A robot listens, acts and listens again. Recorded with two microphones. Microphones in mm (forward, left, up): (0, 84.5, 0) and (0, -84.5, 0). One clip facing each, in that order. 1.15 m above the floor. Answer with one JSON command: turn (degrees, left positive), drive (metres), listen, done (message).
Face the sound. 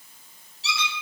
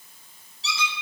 {"turn": 65}
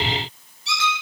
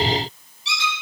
{"turn": 45}
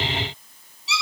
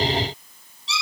{"done": "Found it: a squeak, straight ahead, over 4 m away."}